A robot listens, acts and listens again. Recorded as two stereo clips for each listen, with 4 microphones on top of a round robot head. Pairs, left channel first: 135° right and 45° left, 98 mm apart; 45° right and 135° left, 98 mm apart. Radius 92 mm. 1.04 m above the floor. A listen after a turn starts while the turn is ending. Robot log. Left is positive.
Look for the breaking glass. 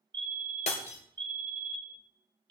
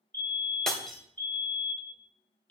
note: The breaking glass: 130° right.
cmd yaw -130
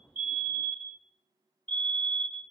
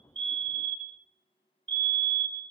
end: I heard breaking glass from this way, but can't make it out now.